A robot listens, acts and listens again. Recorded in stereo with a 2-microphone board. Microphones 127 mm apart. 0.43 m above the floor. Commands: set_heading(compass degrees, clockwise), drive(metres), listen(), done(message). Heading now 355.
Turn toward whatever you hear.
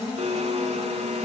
set_heading(55)
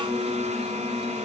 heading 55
set_heading(115)
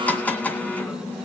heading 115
set_heading(105)
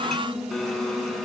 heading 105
done("Facing the blender.")